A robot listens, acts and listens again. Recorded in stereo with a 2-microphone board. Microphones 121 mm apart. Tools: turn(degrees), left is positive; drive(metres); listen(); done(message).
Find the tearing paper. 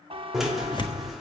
turn(degrees=40)
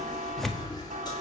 done("Found it: tearing paper, straight ahead, 1 to 2 m away.")